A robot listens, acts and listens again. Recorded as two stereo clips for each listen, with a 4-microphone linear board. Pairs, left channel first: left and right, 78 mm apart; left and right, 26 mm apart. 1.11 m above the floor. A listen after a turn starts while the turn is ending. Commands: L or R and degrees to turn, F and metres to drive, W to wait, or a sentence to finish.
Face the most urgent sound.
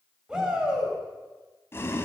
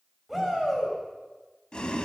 R30
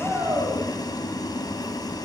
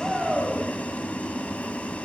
R135
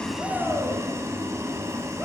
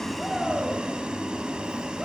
W
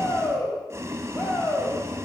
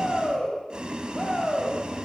L20
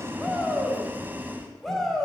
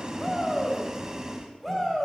Found it: a shout, straight ahead, over 4 m away.